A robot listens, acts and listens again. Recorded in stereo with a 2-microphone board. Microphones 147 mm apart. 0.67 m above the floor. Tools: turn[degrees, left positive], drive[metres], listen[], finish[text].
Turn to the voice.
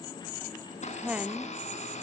Action: turn[-30]
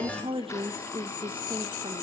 Thought: So it is at 140° right.
Action: turn[-140]
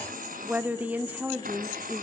Thought: The woman speaking is now 10° right.
Action: turn[-10]
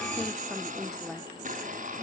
Action: finish[Facing the woman speaking.]